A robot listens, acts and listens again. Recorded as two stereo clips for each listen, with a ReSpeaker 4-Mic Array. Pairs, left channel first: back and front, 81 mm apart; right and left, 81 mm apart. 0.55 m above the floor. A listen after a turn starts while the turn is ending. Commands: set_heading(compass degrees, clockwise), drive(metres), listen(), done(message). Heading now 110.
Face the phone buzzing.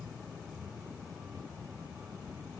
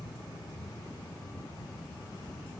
listen()
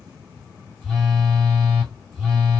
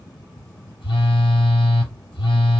set_heading(195)
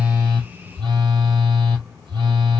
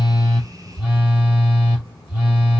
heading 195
set_heading(175)
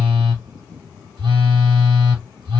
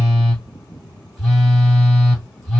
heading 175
done("Facing the phone buzzing, 2 to 4 m away.")